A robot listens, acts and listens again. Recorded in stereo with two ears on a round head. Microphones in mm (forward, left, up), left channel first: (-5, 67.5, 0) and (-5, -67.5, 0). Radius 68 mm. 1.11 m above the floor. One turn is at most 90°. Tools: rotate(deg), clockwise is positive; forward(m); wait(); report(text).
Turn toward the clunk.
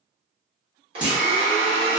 rotate(30)
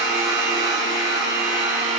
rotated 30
wait()
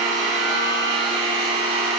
report("I heard a clunk, but can't make it out now. It was about 20° left or 140° right.")